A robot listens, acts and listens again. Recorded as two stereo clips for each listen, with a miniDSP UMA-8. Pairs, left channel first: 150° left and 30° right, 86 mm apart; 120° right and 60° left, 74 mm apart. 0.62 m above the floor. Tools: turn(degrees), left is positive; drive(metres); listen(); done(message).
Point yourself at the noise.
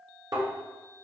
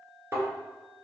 done("Found it: a thud, straight ahead.")